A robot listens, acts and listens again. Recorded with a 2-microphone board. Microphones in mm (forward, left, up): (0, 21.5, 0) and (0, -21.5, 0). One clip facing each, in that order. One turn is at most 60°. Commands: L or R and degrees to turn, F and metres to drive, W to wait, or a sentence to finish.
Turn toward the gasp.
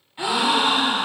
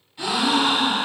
L25
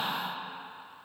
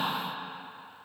W
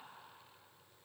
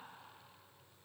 I heard a gasp, but can't make it out now. It was about straight ahead or 130° left.